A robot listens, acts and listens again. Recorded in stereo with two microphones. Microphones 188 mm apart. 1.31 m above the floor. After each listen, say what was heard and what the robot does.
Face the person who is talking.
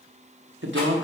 Turn 90° right.
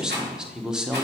Facing the man speaking.